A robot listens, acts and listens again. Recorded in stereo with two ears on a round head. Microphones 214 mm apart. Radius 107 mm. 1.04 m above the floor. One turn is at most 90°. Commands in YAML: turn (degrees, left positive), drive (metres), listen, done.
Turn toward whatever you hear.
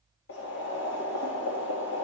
turn: 50
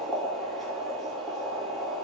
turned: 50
done: "Found it: boiling, straight ahead."